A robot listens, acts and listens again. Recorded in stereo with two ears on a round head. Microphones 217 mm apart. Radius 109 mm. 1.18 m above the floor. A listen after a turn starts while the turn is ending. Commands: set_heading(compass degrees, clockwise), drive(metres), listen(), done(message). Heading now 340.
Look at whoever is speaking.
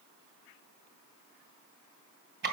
listen()
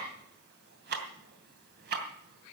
listen()
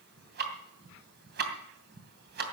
done("I can't make out anyone speaking, only ticking.")